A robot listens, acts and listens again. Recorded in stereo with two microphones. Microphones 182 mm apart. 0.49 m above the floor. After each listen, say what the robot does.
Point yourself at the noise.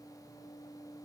Keep listening.
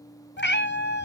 Turn 65° left.
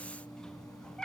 Found it: a cat meowing, straight ahead, under 1 m away.